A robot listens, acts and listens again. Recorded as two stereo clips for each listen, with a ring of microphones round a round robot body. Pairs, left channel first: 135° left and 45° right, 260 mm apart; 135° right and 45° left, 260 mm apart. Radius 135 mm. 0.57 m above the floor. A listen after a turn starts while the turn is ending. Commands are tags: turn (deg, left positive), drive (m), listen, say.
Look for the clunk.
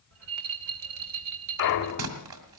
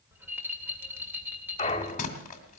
<turn deg="155"/>
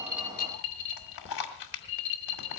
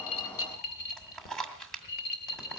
<say>I heard a clunk from this way, but can't make it out now.</say>